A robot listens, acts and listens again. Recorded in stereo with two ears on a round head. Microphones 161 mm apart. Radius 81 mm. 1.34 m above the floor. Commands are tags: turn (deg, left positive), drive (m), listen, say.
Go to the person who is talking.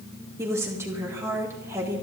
<turn deg="-15"/>
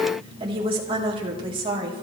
<turn deg="-150"/>
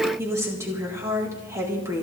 <turn deg="-15"/>
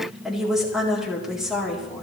<drive m="1.0"/>
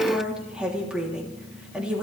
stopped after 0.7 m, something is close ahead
<say>Blocked. The woman speaking is further on, straight ahead.</say>